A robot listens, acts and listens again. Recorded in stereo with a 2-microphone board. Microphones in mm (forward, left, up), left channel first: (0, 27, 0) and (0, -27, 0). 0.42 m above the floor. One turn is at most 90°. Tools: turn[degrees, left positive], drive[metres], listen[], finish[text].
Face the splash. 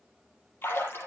Thought: The splash: about 40° left or 140° left.
Action: turn[40]
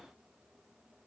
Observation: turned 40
Action: listen[]
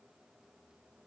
Action: finish[I heard a splash, but can't make it out now. It was about straight ahead or 100° left.]